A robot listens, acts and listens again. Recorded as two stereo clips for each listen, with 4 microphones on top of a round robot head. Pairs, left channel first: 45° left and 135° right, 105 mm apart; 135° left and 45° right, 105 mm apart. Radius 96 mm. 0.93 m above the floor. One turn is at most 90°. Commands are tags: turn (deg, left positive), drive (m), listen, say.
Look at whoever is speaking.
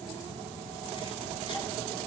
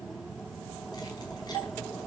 <listen/>
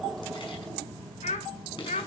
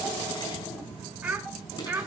<turn deg="30"/>
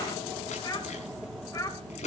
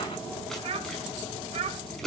<turn deg="-15"/>
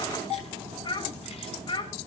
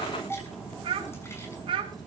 <say>Found it: a child speaking, straight ahead, over 4 m away.</say>